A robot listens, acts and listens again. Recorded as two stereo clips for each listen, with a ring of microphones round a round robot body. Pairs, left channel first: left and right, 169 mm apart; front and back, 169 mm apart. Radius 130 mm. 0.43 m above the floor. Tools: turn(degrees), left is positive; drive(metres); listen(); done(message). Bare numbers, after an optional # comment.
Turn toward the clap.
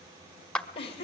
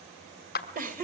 done("Facing the clap, 1 to 2 m away.")